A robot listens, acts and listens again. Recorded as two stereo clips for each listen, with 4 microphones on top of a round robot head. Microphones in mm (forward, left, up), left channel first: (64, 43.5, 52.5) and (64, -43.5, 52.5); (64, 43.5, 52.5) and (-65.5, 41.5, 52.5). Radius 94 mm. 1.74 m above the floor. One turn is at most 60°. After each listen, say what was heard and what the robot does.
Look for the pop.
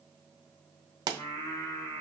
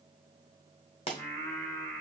The pop: 55° right. Turn 55° right.
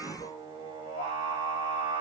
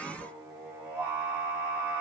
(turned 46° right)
Nothing new. It was at 10° right. Turn 10° right.
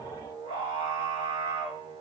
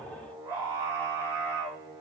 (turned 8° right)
I heard a pop from this way, but can't make it out now.